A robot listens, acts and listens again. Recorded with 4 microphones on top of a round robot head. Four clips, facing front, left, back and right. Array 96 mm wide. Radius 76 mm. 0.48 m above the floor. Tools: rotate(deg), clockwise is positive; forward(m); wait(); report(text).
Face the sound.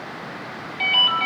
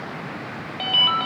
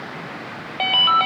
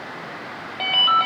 rotate(160)
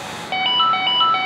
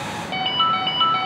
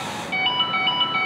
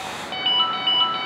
rotate(-25)
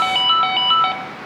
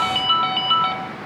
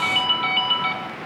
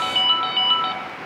rotate(-20)
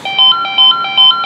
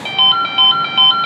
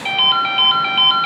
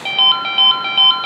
report("Facing the ringtone.")